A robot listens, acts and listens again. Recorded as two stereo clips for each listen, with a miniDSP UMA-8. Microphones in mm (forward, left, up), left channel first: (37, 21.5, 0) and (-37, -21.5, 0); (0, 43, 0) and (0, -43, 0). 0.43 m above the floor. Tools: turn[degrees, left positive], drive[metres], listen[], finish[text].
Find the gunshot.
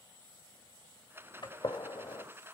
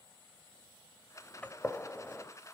Thought: The gunshot: 20° left.
Action: turn[20]
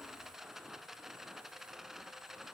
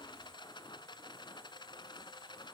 Action: finish[Facing where the gunshot came from. I can't hear it now.]